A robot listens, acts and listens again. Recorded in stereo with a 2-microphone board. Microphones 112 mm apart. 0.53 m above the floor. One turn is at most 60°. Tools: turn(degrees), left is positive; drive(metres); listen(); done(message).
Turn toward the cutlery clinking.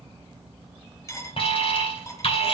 turn(degrees=25)
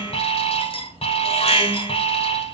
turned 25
turn(degrees=60)
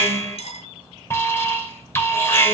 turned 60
turn(degrees=60)
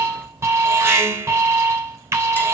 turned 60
turn(degrees=10)
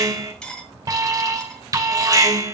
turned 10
done("Facing the cutlery clinking, 1 to 2 m away.")